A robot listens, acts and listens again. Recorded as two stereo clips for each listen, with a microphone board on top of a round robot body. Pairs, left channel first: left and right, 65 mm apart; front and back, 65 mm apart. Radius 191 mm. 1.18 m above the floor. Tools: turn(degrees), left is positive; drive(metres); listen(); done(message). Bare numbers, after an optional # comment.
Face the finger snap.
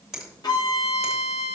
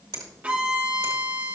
# The finger snap: 175° right.
turn(-175)
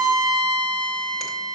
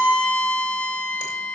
listen()
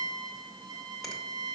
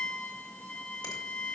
listen()
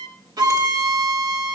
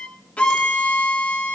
done("I heard a finger snap from this way, but can't make it out now.")